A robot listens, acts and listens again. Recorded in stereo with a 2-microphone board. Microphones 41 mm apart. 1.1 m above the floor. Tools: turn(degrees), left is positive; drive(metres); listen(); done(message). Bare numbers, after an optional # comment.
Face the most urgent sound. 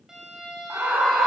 # The scream: about 70° right or 110° right.
turn(-70)
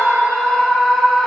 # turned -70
done("Found it: a scream, straight ahead, 2 to 4 m away.")